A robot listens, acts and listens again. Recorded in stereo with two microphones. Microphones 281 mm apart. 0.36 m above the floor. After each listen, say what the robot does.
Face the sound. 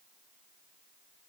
Keep listening.
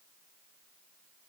Keep listening.
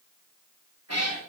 Turn 65° right.
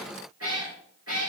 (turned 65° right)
Turn 60° right.
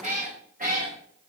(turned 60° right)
Turn 30° right.
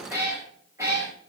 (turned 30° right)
Turn 10° right.
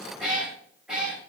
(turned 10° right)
Facing the cat meowing, over 4 m away.